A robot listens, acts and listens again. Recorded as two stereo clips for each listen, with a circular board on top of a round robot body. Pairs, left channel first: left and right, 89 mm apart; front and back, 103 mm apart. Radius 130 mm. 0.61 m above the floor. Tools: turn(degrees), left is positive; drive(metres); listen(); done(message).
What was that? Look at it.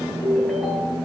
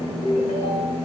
done("Found it: a ringtone, straight ahead, 2 to 4 m away.")